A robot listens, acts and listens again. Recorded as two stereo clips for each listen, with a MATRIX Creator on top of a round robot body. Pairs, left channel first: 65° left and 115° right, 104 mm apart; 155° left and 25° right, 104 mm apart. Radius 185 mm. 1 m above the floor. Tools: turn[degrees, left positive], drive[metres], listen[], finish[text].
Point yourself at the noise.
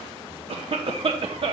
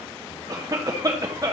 Thought: The cough: 80° right.
Action: turn[-80]
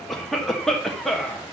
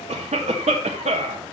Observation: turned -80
Thought: The cough is now 20° right.
Action: turn[-20]
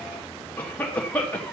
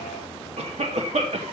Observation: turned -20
Thought: The cough is now 10° right.
Action: turn[-10]
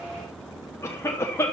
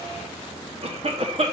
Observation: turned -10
Action: finish[Facing the cough.]